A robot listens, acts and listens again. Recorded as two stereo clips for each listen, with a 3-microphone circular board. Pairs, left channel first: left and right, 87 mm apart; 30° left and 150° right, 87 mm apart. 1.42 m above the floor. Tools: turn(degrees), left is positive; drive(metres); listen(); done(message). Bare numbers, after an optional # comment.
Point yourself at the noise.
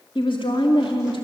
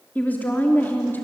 # The woman speaking: 95° left.
turn(95)
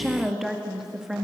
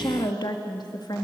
done("Facing the woman speaking, 1 to 2 m away.")